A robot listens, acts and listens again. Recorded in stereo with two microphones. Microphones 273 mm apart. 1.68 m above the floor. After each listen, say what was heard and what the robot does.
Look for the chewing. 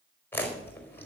Turn 30° left.
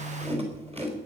So it is at 20° right. Turn 20° right.
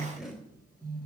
Facing the chewing.